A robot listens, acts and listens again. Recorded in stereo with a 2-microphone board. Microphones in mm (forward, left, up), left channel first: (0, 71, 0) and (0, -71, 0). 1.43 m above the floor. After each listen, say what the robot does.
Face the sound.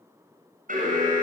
Turn 75° right.
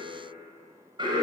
Turn 35° right.
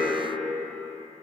Facing the alarm, over 4 m away.